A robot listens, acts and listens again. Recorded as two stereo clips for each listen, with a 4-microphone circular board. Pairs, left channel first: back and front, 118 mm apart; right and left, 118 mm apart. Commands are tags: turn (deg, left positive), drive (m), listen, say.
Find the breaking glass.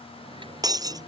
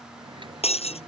<turn deg="-55"/>
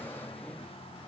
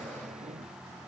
<say>I heard breaking glass from this way, but can't make it out now.</say>